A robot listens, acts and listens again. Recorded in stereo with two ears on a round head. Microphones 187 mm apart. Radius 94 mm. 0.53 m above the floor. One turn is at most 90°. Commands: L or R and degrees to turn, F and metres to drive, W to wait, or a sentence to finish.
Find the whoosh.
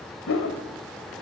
L70
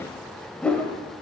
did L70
Facing the whoosh, 2 to 4 m away.